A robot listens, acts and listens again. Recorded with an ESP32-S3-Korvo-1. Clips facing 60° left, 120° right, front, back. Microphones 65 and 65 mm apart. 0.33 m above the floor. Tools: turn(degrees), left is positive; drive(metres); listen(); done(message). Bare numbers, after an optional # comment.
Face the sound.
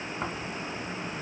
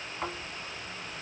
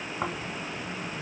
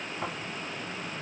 # The snoring: 20° right.
turn(-20)
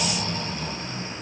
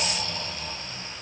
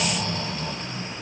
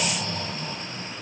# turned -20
done("Found it: snoring, straight ahead, 1 to 2 m away.")